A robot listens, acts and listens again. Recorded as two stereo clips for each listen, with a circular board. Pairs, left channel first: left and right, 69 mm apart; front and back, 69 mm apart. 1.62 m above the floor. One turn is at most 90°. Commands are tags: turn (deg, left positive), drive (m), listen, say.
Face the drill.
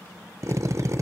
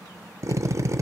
<turn deg="-90"/>
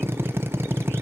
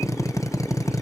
<turn deg="-35"/>
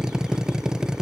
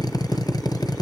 <turn deg="-10"/>
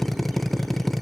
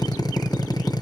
<say>Facing the drill, 1 to 2 m away.</say>